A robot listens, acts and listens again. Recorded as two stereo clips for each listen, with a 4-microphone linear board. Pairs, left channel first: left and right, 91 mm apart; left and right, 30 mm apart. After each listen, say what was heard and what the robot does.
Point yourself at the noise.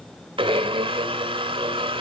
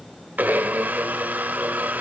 Turn 90° right.
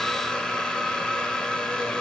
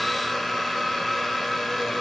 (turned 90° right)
So it is at 10° left. Turn 10° left.
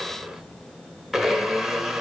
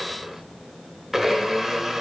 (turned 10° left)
Facing the blender, 1 to 2 m away.